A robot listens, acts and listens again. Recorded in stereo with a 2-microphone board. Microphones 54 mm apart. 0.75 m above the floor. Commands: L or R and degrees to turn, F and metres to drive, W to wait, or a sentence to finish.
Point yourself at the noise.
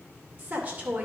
R30
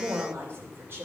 R130
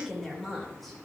Found it: a woman speaking, straight ahead.